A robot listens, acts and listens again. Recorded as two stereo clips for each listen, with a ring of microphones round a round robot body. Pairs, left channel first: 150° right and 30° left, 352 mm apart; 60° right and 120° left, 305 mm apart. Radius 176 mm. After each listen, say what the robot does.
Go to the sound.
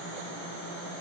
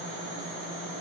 Keep listening.
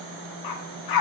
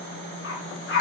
Turn 120° right.
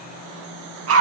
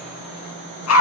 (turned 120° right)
Turn 20° right.
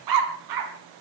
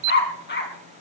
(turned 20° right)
Drive 1.0 m forward.
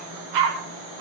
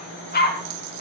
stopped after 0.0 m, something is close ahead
Something is in my way. I am facing the dog barking but have not reached it.